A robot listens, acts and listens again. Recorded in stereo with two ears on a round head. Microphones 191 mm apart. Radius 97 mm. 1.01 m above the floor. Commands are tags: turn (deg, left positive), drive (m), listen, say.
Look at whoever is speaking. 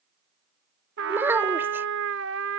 <turn deg="-30"/>
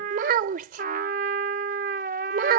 <turn deg="-135"/>
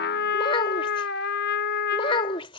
<turn deg="25"/>
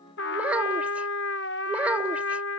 <say>Facing the child speaking.</say>